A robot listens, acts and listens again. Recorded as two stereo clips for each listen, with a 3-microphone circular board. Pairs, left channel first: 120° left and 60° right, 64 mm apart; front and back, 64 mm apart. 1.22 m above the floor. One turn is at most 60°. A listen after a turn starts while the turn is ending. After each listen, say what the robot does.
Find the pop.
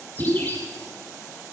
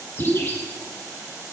Turn 55° right.
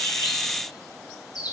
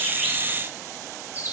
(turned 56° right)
I heard a pop from this way, but can't make it out now.